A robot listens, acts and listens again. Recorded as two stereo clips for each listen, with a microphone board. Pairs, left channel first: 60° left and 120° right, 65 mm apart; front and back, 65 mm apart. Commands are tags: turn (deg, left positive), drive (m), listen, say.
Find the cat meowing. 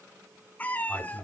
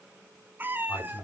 <turn deg="125"/>
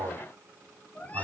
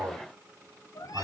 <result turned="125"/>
<say>Facing the cat meowing.</say>